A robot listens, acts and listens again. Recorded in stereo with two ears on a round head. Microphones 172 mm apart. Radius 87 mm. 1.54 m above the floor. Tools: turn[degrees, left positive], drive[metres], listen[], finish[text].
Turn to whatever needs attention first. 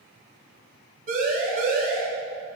Thought: The siren: about 45° right or 135° right.
Action: turn[-45]
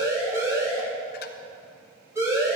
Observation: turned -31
Thought: So it is at 15° right.
Action: turn[-15]
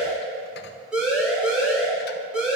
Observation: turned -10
Action: finish[Found it: a siren, straight ahead.]